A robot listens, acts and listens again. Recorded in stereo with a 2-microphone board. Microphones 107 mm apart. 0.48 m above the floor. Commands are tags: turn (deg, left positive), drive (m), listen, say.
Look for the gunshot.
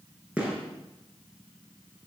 <turn deg="-30"/>
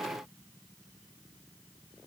<listen/>
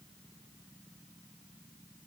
<say>I heard a gunshot, but can't make it out now. It was about 20° left or 140° right.</say>